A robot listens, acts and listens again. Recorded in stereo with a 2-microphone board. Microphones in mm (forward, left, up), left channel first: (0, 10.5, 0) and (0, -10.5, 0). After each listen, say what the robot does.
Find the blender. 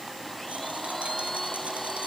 Turn 30° left.
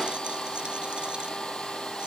Turn 135° left.
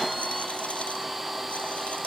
Found it: a blender, straight ahead.